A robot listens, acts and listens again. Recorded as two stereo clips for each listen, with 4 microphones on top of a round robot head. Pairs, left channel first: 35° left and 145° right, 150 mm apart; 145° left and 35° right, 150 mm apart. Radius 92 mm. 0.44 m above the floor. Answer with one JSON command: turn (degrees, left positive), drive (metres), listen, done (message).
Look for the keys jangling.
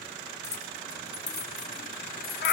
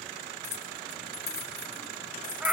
{"turn": 85}
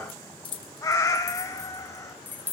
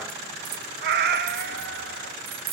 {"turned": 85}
{"turn": -45}
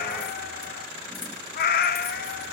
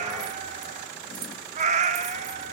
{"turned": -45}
{"listen": true}
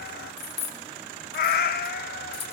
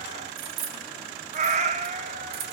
{"turn": -15}
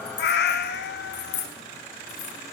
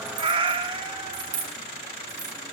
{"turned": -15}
{"done": "Found it: keys jangling, straight ahead."}